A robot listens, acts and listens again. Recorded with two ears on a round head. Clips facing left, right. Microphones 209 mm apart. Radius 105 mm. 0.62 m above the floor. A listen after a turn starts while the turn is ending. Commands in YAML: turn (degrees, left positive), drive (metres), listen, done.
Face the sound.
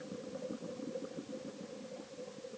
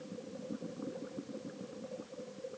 listen: true
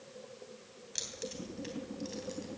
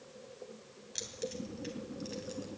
turn: 30
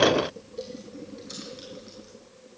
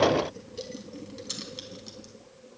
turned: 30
turn: -50
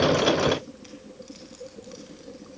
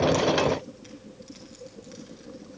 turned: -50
done: "Facing the keys jangling, 2 to 4 m away."